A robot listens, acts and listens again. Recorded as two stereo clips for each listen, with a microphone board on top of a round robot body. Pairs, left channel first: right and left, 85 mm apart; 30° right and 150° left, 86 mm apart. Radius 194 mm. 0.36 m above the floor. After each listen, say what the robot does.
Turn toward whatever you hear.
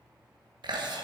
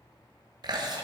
Turn 115° left.
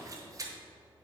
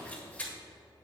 Turn 45° left.
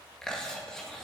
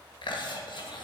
Turn 10° right.
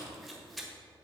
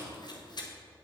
Facing the chewing, 1 to 2 m away.